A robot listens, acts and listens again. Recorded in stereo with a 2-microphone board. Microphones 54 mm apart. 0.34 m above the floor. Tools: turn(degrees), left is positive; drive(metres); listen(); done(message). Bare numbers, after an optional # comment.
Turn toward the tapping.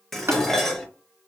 # The tapping: about 60° right or 120° right.
turn(-60)
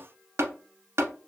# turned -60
# So it is at 60° right.
turn(-60)
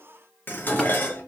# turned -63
listen()
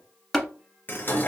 done("Found it: tapping, straight ahead.")